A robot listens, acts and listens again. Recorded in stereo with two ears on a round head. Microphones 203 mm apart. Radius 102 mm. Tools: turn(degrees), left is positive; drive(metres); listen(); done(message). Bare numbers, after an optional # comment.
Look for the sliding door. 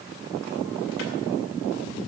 listen()
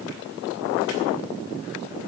listen()
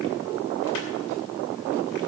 done("I can't make out a sliding door.")